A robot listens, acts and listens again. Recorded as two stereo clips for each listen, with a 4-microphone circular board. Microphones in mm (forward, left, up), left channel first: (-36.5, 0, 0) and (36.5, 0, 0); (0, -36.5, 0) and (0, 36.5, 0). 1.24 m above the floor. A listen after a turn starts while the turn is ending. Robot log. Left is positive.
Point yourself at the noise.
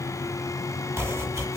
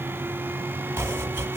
note: The chopping: 40° left.
cmd yaw +40
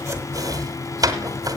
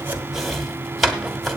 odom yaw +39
end: Found it: chopping, straight ahead.